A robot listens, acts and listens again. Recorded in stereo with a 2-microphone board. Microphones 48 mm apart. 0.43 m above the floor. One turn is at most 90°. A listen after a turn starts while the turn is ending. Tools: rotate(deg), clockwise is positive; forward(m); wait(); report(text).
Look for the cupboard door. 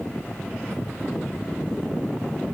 wait()
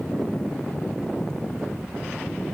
wait()
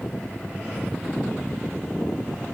report("I can't make out a cupboard door to turn to.")